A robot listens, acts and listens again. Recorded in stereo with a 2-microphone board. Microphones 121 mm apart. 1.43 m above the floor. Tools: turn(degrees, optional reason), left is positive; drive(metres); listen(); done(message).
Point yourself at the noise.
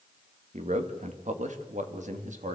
turn(degrees=-90)
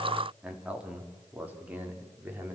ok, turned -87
turn(degrees=-15, reason="So it is at 15° right.")
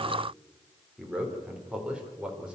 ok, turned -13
done("Facing the man speaking, over 4 m away.")